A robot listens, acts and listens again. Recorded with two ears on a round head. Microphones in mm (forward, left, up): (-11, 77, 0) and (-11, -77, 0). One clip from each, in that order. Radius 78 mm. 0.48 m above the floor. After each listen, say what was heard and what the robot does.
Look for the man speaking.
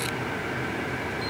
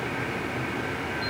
Keep listening.
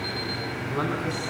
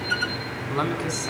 The man speaking: about 65° right or 115° right. Turn 65° right.
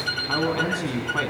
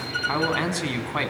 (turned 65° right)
So it is at 50° right. Turn 50° right.
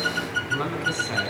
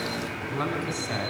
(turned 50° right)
Facing the man speaking.